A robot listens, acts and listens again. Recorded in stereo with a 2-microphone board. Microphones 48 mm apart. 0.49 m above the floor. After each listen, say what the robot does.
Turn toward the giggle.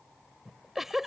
Turn 30° right.
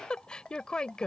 Turn 20° left.
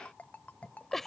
Facing the giggle.